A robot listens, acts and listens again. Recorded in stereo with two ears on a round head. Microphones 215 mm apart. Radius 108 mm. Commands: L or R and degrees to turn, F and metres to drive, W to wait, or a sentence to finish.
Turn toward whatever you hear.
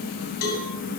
L65
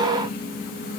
W
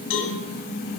L50
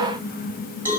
R10
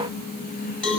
Found it: a cowbell, straight ahead.